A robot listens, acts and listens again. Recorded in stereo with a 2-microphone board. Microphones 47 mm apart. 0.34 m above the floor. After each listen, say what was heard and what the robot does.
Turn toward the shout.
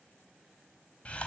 Keep listening.
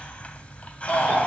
The shout: about 35° left or 145° left. Turn 35° left.
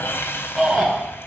Found it: a shout, straight ahead.